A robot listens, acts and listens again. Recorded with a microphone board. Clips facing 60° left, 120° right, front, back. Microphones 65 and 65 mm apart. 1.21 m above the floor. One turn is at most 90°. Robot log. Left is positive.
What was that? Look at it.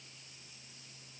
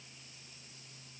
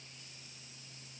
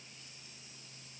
cmd idle
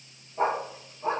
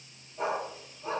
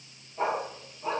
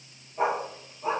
note: The dog barking: 105° left.
cmd yaw +90
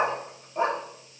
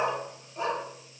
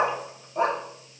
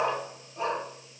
note: The dog barking is now 10° left.
cmd yaw +10
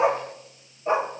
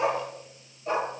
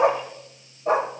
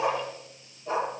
end: Facing the dog barking, 2 to 4 m away.